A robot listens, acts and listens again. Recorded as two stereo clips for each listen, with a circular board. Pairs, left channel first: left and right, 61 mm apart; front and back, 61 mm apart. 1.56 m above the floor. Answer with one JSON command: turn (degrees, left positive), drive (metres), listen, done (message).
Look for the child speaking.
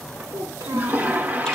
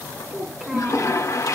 {"turn": -100}
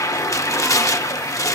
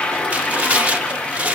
{"listen": true}
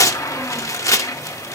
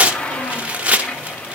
{"listen": true}
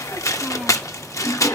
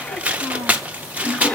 {"done": "I heard a child speaking from this way, but can't make it out now."}